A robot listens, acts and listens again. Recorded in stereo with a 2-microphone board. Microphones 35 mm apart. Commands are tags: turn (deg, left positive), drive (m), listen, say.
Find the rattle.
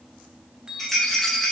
<turn deg="30"/>
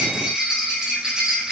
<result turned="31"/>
<turn deg="-25"/>
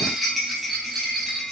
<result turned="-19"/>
<say>Found it: a rattle, straight ahead.</say>